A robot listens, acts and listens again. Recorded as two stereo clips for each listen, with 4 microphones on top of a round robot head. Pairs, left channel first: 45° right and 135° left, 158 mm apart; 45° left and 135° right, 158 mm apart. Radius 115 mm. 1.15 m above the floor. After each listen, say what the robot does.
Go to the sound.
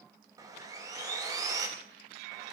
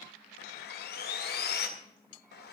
Turn 65° left.
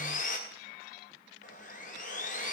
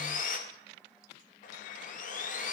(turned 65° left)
Drive 1.0 m forward.
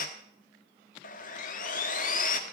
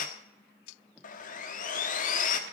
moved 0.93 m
Drive 1.0 m forward.
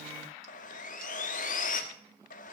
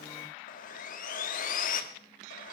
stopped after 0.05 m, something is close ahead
I am next to the sawing.